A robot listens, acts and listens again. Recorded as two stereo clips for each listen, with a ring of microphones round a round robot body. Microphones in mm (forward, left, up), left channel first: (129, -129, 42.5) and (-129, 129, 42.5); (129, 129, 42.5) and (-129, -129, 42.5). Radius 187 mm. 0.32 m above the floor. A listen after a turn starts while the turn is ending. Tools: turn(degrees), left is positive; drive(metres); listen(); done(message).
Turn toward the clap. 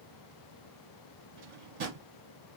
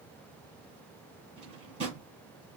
listen()
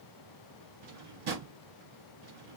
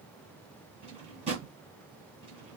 listen()
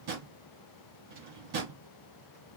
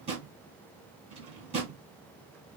done("I can't make out a clap, only a drawer.")